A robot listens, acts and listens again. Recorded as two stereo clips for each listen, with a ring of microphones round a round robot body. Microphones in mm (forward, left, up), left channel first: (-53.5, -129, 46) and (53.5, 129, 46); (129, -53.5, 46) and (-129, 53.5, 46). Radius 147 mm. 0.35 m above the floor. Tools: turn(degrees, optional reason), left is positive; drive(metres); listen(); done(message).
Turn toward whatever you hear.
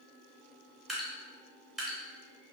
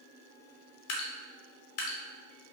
turn(degrees=-20, reason="The dripping: 20° right.")
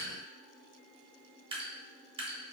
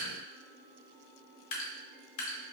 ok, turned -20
done("Found it: dripping, straight ahead.")